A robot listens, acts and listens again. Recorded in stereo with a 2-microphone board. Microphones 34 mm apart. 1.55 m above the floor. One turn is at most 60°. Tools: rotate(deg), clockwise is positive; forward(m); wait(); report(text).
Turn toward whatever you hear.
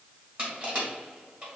rotate(40)
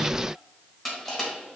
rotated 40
report("Facing the crushing, 2 to 4 m away.")